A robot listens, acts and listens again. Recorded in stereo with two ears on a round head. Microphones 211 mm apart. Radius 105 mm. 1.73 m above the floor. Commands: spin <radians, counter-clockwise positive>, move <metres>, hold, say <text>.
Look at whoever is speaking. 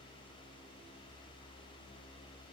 hold
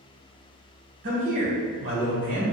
spin -0.70
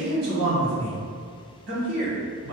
spin -1.75
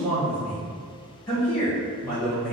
say Facing the man speaking, 1 to 2 m away.